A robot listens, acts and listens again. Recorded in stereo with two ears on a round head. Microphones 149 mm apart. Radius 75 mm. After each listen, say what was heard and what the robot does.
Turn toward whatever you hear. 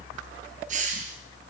The hiss: about 45° right or 135° right. Turn 45° right.
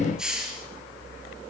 Found it: a hiss, straight ahead.